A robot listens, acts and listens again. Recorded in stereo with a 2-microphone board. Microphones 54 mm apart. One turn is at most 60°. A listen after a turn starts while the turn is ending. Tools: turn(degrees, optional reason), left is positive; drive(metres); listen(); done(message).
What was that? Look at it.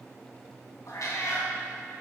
turn(degrees=60, reason="The cat meowing: about 70° left or 110° left.")
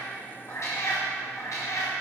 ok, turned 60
turn(degrees=60, reason="So it is at 75° left.")
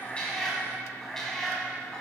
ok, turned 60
turn(degrees=15, reason="The cat meowing is now 15° left.")
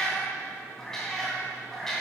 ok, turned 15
turn(degrees=10, reason="The cat meowing is now 10° left.")
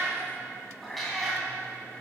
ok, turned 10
done("Found it: a cat meowing, straight ahead, 2 to 4 m away.")